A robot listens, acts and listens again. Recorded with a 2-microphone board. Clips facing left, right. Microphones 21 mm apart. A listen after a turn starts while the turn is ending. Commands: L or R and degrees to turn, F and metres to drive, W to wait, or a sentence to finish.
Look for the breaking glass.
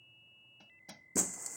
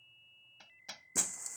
L30
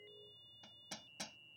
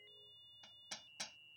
W
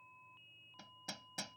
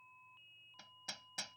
I heard breaking glass, but can't make it out now. It was about 30° right or 150° left.